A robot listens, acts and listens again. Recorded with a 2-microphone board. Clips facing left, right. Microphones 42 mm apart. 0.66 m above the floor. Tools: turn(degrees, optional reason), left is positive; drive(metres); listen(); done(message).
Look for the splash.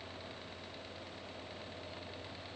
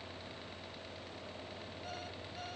listen()
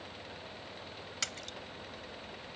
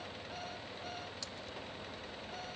turn(degrees=75, reason="The splash: about 75° left or 105° left.")
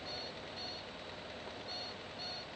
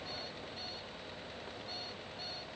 listen()
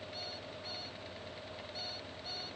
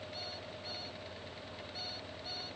done("I heard a splash, but can't make it out now. It was about straight ahead or 30° left.")